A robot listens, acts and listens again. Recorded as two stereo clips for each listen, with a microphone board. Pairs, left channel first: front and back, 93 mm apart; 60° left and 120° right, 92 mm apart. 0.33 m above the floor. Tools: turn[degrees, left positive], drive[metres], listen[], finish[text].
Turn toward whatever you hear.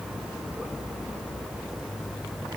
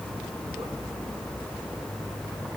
Action: listen[]
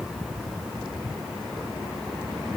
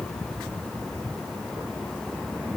Action: listen[]
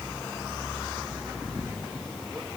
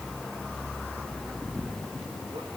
Action: finish[I can't make out anything to turn to.]